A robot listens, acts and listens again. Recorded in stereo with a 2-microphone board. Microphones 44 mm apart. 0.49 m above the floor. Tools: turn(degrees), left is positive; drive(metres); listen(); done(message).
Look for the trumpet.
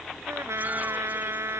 turn(degrees=-90)
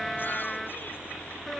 done("Found it: a trumpet, straight ahead.")